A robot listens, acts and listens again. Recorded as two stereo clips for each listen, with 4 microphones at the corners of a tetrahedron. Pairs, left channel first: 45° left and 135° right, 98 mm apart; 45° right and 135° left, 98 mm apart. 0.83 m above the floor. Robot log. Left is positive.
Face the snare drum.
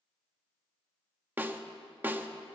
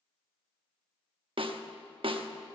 note: The snare drum: 155° left.
cmd yaw +155
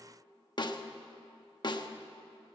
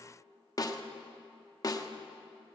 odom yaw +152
end: Facing the snare drum, under 1 m away.